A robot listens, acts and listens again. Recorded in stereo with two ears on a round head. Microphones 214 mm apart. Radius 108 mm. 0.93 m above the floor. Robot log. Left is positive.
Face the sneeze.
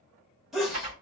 cmd yaw +30
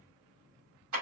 cmd idle
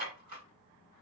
end: I heard a sneeze, but can't make it out now. It was about 30° right or 150° left.